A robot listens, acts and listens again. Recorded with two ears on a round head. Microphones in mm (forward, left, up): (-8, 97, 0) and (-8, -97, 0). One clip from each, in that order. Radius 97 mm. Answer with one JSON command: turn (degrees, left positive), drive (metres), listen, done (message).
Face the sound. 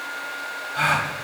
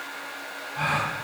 {"turn": 40}
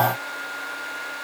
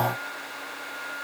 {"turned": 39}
{"listen": true}
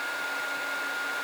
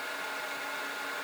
{"done": "I heard a gasp, but can't make it out now. It was about 5° left or 100° left."}